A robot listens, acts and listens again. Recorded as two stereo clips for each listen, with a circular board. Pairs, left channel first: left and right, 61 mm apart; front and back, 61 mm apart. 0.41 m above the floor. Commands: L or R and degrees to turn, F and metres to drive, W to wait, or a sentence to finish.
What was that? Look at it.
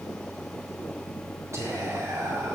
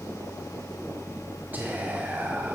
R120
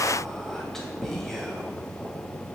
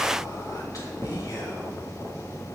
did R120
Found it: whispering, straight ahead, 2 to 4 m away.